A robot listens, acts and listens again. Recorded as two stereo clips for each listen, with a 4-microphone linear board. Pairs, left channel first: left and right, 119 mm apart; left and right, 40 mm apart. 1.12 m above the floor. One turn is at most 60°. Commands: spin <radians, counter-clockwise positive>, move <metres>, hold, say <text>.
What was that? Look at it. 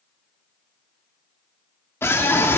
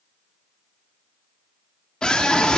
spin 0.35
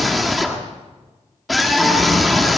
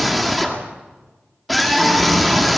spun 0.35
say Found it: a scream, straight ahead.